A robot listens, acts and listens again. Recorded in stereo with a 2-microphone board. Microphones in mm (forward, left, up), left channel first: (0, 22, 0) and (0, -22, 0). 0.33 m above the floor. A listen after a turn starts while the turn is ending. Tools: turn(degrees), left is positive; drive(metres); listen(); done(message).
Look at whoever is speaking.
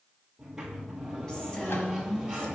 turn(degrees=20)
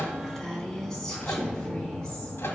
turn(degrees=30)
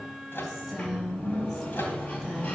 turn(degrees=-10)
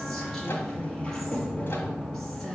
done("Facing the woman speaking, 2 to 4 m away.")